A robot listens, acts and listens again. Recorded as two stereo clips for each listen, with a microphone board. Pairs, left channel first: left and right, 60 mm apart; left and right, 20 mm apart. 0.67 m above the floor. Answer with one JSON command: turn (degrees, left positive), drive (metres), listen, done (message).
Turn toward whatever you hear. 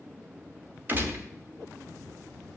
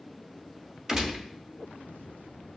{"turn": -30}
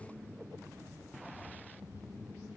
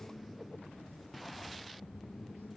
{"listen": true}
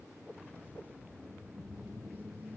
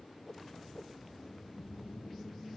{"done": "I heard a gunshot, but can't make it out now. It was about straight ahead or 120° right."}